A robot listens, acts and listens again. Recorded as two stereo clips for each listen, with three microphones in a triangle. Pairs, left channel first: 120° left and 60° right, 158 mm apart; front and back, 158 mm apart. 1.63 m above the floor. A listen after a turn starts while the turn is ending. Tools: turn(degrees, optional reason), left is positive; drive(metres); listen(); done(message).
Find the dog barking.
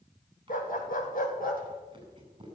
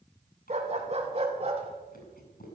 turn(degrees=135, reason="The dog barking: 135° left.")
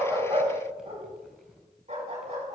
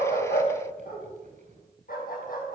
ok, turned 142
turn(degrees=-20, reason="The dog barking is now 20° right.")
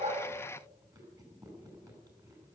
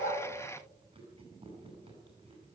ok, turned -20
listen()
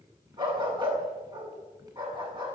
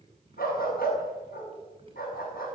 done("Found it: a dog barking, straight ahead.")